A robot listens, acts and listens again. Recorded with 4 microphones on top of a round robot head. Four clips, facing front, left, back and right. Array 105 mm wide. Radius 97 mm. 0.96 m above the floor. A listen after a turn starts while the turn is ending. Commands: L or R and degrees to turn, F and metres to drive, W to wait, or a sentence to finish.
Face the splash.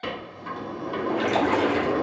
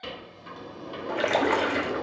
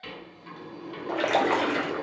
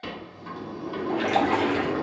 L140
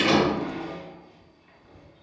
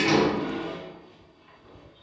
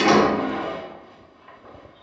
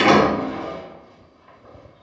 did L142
I heard a splash from this way, but can't make it out now.